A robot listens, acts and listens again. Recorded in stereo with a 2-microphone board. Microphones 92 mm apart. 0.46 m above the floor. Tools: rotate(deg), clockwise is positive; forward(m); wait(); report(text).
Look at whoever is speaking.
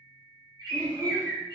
rotate(-20)
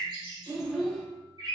report("Facing the child speaking.")